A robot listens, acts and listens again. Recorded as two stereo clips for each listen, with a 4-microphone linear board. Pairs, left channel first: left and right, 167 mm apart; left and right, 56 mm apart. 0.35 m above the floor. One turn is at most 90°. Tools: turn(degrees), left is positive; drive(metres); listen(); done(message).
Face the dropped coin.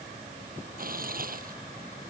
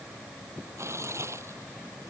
listen()
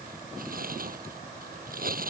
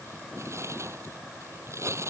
listen()
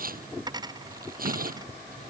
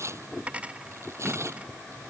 turn(degrees=-25)
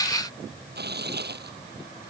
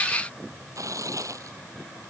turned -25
listen()
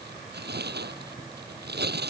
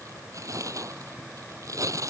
done("I heard a dropped coin, but can't make it out now. It was about straight ahead or 130° right.")